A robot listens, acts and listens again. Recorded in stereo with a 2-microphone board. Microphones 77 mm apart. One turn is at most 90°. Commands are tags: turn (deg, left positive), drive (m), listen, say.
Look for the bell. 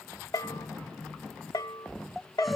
<turn deg="55"/>
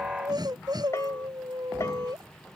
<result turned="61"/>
<listen/>
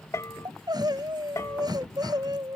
<turn deg="45"/>
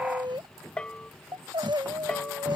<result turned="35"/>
<turn deg="15"/>
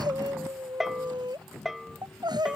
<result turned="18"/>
<say>Facing the bell.</say>